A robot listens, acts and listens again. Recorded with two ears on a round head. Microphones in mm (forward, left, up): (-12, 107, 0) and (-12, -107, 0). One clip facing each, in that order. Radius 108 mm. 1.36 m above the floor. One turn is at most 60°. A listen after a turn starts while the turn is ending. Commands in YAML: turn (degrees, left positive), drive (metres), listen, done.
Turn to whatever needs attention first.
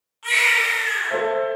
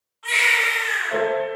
turn: 45
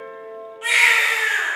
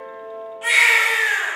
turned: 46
done: "Facing the baby crying, 1 to 2 m away."